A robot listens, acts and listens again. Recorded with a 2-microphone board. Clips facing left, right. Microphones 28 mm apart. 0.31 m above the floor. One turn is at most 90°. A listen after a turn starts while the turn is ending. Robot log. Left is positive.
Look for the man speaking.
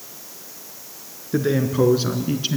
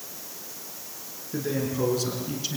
note: The man speaking: about 30° left or 150° left.
cmd yaw +30
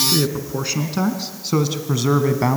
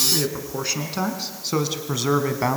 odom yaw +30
end: Facing the man speaking.